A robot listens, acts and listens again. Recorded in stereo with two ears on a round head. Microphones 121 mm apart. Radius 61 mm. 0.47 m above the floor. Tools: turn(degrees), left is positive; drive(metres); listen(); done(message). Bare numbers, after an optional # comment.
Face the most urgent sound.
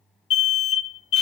# The alarm: about 55° left or 125° left.
turn(55)
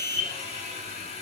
# So it is at 15° left.
turn(15)
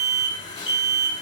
done("Found it: an alarm, straight ahead.")